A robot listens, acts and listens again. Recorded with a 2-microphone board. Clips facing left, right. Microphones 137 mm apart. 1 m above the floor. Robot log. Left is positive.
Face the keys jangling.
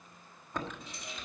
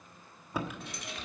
note: The keys jangling: about 70° right or 110° right.
cmd yaw -70
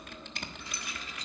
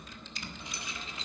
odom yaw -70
note: So it is at 25° right.
cmd yaw -25
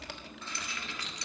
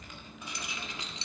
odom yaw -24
note: The keys jangling is now 25° right.
cmd yaw -25
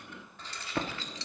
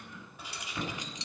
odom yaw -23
note: The keys jangling is now 20° right.
cmd yaw -20
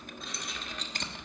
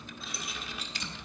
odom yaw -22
note: The keys jangling is now 10° right.
cmd yaw -10
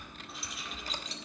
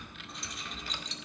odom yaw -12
end: Found it: keys jangling, straight ahead, 1 to 2 m away.